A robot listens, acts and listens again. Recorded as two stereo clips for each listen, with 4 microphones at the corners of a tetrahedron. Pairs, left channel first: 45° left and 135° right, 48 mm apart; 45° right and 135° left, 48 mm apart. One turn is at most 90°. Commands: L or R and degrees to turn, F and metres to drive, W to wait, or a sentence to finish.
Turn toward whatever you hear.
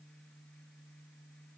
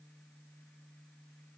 W
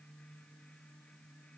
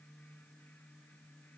W
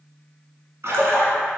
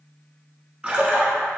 R90
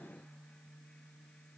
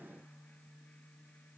R70
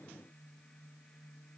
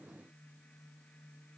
I heard a splash from this way, but can't make it out now.